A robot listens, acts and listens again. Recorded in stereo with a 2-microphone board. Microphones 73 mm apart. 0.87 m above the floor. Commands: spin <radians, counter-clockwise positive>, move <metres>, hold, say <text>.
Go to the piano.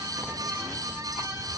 hold
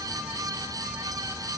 hold
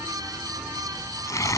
say I can't make out a piano to turn to.